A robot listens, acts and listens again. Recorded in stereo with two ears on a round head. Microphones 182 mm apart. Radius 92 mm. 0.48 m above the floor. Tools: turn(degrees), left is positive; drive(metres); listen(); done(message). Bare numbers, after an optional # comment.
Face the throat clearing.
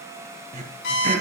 # The throat clearing: about 35° right or 145° right.
turn(-35)
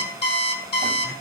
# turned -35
listen()
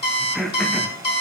done("Facing the throat clearing.")